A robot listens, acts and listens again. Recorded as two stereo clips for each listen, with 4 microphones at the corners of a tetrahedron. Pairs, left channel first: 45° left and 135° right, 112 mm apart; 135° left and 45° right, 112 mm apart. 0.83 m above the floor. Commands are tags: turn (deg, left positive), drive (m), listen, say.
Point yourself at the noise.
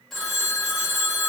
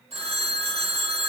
<turn deg="-40"/>
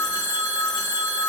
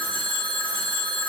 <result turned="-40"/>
<say>Facing the phone ringing, 1 to 2 m away.</say>